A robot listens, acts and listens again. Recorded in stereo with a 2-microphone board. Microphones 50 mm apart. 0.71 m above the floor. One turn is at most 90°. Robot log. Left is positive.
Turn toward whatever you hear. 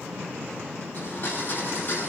note: The blender: about 40° left or 140° left.
cmd yaw +40
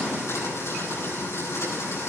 note: So it is at 100° left.
cmd yaw +90
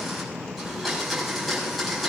end: Facing the blender.